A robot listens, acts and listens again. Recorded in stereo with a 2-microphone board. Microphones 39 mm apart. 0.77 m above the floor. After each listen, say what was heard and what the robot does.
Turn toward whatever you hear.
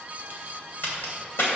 The crack: about 75° left or 105° left. Turn 75° left.
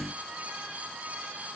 Keep listening.
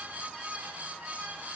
I heard a crack, but can't make it out now. It was about straight ahead or 30° left.